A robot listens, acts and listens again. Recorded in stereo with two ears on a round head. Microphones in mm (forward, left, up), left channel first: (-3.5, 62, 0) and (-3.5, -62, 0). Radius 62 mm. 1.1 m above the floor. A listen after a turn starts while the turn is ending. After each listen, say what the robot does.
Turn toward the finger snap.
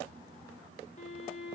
Keep listening.
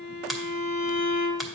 Turn 30° left.
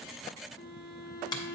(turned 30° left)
Turn 150° left.
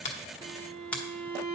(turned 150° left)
Turn 10° left.
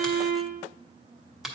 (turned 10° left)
Facing the finger snap, under 1 m away.